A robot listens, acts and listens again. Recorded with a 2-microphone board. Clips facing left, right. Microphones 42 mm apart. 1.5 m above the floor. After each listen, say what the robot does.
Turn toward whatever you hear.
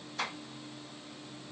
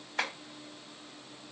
Turn 50° right.
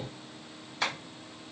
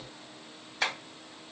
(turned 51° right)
Facing the tapping.